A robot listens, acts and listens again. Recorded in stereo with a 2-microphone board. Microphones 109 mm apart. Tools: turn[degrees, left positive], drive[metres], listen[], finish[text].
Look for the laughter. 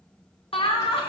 Thought: The laughter: about 55° left or 125° left.
Action: turn[55]
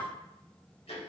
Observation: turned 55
Thought: So it is at 20° left.
Action: turn[20]
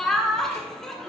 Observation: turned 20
Action: finish[Facing the laughter, 1 to 2 m away.]